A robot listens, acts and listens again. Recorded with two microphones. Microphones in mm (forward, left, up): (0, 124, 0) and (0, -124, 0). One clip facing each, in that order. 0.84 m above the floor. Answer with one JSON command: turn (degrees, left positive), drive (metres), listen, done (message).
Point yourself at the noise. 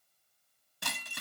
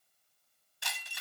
{"turn": 55}
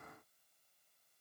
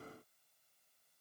{"listen": true}
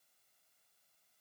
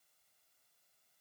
{"done": "I heard breaking glass, but can't make it out now. It was about straight ahead or 70° left."}